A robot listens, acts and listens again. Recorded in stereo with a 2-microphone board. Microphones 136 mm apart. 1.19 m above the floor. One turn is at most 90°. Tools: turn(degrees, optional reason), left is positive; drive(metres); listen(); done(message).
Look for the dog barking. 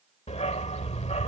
turn(degrees=55, reason="The dog barking: about 55° left or 125° left.")
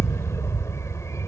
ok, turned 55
turn(degrees=25, reason="So it is at 25° left.")
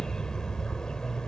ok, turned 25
done("Facing the dog barking.")